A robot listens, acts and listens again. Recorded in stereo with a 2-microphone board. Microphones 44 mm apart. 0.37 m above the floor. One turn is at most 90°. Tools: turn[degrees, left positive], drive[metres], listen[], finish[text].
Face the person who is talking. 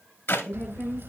Thought: The woman speaking: about 20° left or 160° left.
Action: turn[20]
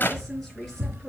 Action: listen[]
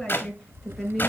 Action: finish[Found it: a woman speaking, straight ahead, over 4 m away.]